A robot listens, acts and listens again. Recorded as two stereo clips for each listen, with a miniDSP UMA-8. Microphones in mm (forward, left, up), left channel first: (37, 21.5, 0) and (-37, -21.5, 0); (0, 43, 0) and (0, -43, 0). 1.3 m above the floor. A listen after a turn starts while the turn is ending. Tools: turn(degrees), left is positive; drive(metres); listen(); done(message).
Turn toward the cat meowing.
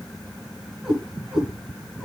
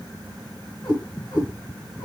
turn(degrees=135)
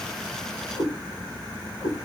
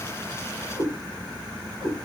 done("Facing the cat meowing, over 4 m away.")